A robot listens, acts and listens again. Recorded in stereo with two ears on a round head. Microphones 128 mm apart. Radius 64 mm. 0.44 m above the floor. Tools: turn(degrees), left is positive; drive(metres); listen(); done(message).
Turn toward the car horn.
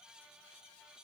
listen()
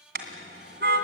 turn(degrees=-90)
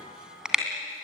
done("Facing the car horn, 2 to 4 m away.")